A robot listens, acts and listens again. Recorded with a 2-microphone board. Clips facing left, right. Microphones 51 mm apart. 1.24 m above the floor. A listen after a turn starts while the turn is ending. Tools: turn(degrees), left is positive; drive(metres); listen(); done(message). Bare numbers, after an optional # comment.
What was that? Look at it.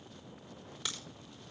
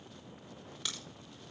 turn(30)
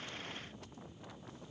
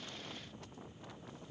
listen()
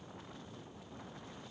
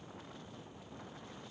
done("I heard a crack, but can't make it out now. It was about 25° right or 145° left.")